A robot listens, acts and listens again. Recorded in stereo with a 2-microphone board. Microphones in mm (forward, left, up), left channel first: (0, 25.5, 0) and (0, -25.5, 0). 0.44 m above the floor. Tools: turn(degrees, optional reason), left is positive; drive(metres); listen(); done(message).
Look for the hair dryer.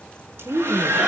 turn(degrees=-45, reason="The hair dryer: about 45° right or 135° right.")
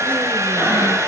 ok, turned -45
turn(degrees=-90, reason="So it is at 90° right.")
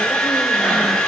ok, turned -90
turn(degrees=10, reason="The hair dryer is now 10° left.")
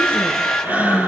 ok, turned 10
done("Found it: a hair dryer, straight ahead.")